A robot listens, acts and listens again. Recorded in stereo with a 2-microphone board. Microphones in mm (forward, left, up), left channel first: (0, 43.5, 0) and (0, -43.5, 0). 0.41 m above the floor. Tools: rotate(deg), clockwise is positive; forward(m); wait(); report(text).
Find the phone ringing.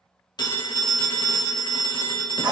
rotate(-55)
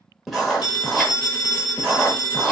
rotate(-60)
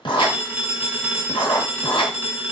rotate(25)
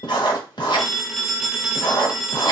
report("Facing the phone ringing, under 1 m away.")